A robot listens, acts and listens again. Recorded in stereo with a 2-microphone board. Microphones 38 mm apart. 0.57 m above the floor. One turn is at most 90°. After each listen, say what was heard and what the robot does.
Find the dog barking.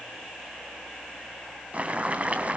Keep listening.
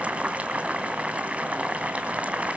Keep listening.
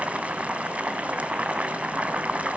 I can't make out a dog barking, only boiling.